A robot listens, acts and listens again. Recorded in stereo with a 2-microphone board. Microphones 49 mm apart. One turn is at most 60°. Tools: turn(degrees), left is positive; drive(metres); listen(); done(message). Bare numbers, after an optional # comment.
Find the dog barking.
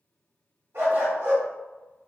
# The dog barking: about 60° right or 120° right.
turn(-60)
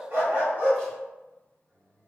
# So it is at 45° right.
turn(-45)
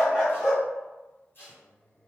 done("Found it: a dog barking, straight ahead.")